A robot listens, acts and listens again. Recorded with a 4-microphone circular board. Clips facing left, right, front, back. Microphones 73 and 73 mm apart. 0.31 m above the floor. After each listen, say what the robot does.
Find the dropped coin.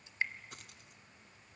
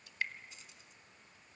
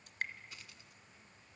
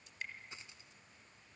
Turn 115° left.
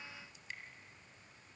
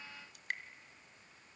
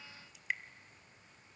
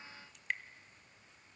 I heard a dropped coin from this way, but can't make it out now.